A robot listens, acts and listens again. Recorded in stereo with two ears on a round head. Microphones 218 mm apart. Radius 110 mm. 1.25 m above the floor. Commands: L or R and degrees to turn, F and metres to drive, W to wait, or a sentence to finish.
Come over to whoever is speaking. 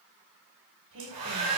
R60
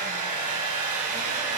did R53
W
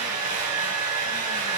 W
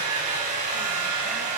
I heard a woman speaking, but can't make it out now. It was about 5° right or 65° right. I did not reach it.